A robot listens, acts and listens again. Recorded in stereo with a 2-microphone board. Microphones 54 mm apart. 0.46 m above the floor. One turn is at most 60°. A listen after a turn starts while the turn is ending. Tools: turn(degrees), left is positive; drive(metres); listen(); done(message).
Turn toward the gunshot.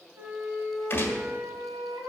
turn(degrees=45)
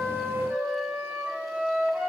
listen()
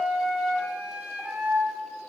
done("I heard a gunshot, but can't make it out now. It was about straight ahead or 90° left.")